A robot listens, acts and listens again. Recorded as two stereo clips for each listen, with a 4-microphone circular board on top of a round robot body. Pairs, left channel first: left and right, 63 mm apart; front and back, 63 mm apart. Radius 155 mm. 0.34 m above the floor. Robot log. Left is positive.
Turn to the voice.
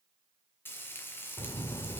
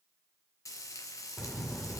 note: The child speaking: 85° left.
cmd yaw +85
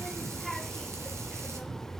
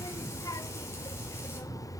end: Facing the child speaking.